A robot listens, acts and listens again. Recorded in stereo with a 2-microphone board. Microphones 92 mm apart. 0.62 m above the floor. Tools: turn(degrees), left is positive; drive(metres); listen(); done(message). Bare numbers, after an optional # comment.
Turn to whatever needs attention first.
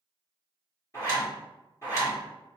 listen()
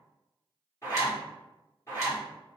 listen()
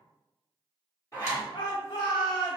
# The shout: about 60° left or 120° left.
turn(60)
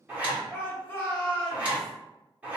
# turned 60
# So it is at 25° left.
turn(25)
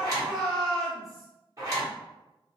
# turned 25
done("Facing the shout, 1 to 2 m away.")